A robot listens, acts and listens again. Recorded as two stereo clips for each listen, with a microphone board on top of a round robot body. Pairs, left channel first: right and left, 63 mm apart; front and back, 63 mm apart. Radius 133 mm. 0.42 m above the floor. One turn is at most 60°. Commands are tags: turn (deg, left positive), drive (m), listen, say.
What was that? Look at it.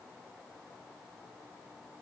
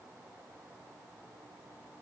<listen/>
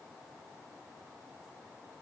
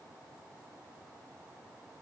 <listen/>
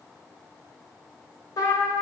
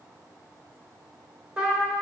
<turn deg="-60"/>
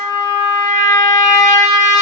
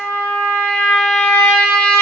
<turn deg="-60"/>
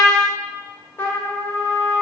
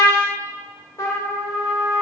<turn deg="-35"/>
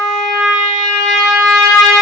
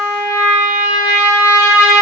<turn deg="-10"/>
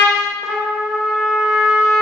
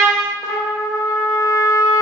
<say>Found it: a trumpet, straight ahead.</say>